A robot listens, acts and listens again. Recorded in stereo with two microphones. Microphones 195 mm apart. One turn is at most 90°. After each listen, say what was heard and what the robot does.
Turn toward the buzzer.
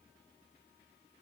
Keep listening.
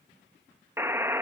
Turn 30° right.
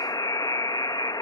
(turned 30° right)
So it is at 20° left. Turn 20° left.
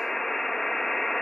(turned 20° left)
Found it: a buzzer, straight ahead.